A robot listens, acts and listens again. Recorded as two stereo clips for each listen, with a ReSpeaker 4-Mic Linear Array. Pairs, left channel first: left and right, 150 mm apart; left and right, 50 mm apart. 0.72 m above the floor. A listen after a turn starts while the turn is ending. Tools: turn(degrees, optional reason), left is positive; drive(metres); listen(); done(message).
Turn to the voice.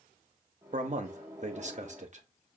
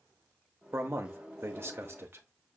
turn(degrees=-50, reason="The man speaking: about 50° right or 130° right.")
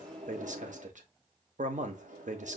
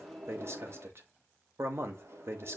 turn(degrees=-70, reason="So it is at 70° right.")
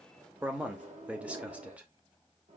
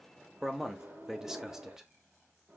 turn(degrees=-10, reason="The man speaking is now 10° right.")
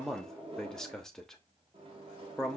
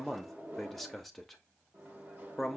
done("Found it: a man speaking, straight ahead, under 1 m away.")